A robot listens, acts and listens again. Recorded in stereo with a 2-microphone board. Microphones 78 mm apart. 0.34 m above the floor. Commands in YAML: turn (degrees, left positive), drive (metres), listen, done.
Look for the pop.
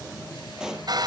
turn: -30
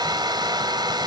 listen: true
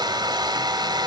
done: "I heard a pop, but can't make it out now. It was about 25° left or 145° right."